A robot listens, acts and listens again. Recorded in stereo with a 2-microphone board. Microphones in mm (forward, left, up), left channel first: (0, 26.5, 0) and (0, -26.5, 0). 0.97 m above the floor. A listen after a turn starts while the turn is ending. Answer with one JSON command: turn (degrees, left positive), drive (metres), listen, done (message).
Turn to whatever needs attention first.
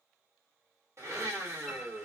{"listen": true}
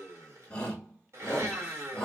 {"turn": 15}
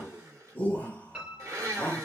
{"turn": 155}
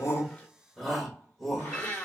{"done": "Facing the shout."}